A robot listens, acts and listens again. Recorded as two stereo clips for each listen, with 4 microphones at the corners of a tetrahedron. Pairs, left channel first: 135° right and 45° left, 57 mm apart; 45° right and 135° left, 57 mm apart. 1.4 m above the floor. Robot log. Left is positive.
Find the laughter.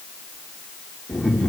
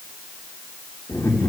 note: The laughter: 45° right.
cmd yaw -45
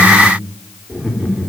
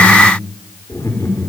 note: The laughter is now 25° right.
cmd yaw -25
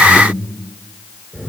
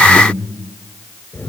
note: The laughter is now 20° right.
cmd yaw -20
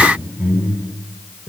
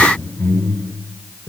note: The laughter is now 10° right.
cmd yaw -10
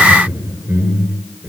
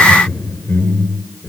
end: Facing the laughter.